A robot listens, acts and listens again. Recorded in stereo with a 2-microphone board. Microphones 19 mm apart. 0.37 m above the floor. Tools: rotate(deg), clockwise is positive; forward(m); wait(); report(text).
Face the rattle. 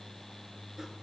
wait()
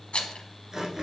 rotate(-90)
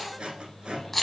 report("Found it: a rattle, straight ahead, under 1 m away.")